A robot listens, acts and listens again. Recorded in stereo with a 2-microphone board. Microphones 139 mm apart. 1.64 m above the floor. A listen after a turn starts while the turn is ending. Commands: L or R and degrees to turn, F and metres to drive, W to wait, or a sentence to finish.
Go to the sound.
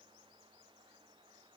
W
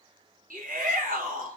R90
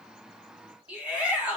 R10
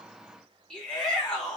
F1.0
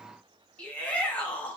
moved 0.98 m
L10
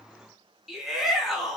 F1.0
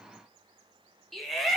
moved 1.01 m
F1.0
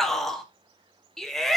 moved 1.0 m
F1.0
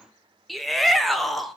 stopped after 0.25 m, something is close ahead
I am next to the shout.